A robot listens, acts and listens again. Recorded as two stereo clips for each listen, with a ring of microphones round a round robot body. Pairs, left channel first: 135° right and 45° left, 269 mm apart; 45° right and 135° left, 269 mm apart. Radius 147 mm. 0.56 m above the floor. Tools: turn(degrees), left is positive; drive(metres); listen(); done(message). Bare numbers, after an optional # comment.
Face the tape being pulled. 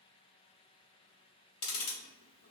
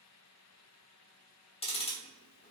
listen()
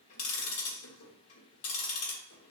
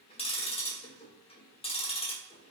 listen()
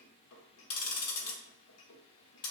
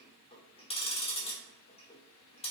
done("I can't make out tape being pulled to turn to.")